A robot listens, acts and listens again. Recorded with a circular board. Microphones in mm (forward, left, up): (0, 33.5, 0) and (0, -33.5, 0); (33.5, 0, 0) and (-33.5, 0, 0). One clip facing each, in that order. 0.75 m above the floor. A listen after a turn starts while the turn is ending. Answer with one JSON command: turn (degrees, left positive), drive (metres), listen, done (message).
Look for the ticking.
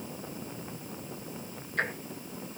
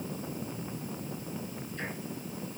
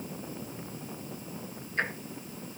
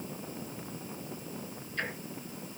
{"turn": 60}
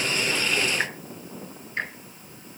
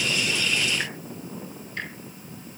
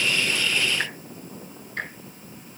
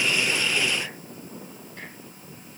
{"turn": 25}
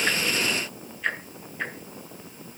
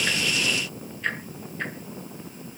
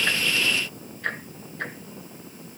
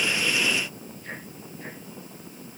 {"done": "Facing the ticking, 2 to 4 m away."}